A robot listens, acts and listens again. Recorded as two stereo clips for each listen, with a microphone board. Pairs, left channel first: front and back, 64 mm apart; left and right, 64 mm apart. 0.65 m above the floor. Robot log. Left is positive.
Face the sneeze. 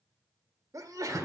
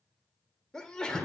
note: The sneeze: 165° left.
cmd yaw +165
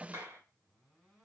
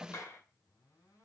end: Facing where the sneeze came from. I can't hear it now.